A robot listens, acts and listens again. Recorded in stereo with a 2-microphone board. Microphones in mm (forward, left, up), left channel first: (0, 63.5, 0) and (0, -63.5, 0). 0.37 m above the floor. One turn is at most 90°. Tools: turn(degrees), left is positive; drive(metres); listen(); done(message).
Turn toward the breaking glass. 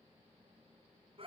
listen()
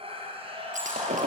turn(degrees=-90)
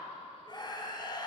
done("Facing where the breaking glass came from. I can't hear it now.")